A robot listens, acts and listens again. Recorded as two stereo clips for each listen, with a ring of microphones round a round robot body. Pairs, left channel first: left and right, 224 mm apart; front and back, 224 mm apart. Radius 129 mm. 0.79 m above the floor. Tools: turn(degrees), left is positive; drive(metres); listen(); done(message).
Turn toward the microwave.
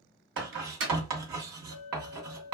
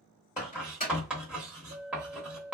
turn(degrees=-60)
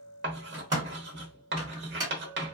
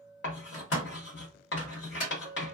turn(degrees=-15)
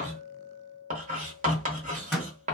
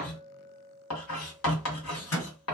done("Found it: a microwave, straight ahead.")